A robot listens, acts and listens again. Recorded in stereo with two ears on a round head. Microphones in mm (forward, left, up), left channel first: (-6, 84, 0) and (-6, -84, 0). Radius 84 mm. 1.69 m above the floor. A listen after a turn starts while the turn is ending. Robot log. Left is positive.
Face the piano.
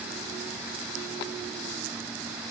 cmd idle
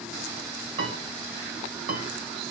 note: The piano: about 45° right or 135° right.
cmd yaw -45
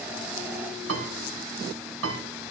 note: So it is at 90° right.
cmd yaw -90
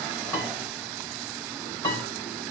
note: The piano is now 25° left.
cmd yaw +25
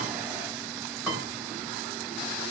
end: Facing the piano.